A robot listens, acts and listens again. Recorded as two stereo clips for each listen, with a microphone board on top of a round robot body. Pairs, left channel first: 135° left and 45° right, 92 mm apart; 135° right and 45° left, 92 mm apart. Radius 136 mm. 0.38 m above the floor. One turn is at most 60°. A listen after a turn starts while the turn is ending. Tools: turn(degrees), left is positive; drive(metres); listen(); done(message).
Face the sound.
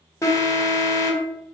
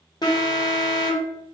turn(degrees=-60)
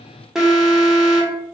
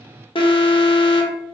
turn(degrees=-60)
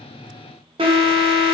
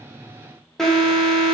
turn(degrees=-50)
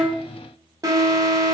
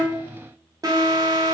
done("Found it: an alarm, straight ahead, under 1 m away.")